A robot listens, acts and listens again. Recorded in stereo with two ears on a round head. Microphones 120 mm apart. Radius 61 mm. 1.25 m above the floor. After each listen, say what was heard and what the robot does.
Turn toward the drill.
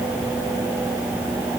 Keep listening.
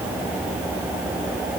Keep listening.
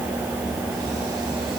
I can't make out a drill to turn to.